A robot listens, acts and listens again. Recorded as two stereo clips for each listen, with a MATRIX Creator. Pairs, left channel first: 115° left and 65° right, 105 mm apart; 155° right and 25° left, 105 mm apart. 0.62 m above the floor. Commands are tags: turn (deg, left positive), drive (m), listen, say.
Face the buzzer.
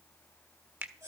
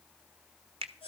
<listen/>
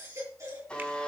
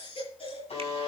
<turn deg="-170"/>
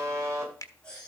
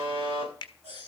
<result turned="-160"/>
<turn deg="-10"/>
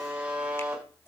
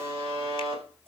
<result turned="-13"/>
<say>Facing the buzzer.</say>